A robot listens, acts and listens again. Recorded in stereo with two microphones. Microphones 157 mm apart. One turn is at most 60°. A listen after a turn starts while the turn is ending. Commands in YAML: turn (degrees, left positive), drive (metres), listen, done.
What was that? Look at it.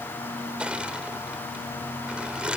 turn: -30
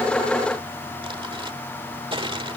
turn: -60
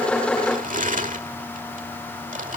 turn: -60
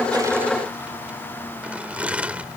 turn: -10
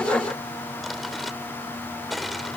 done: "Found it: crushing, straight ahead."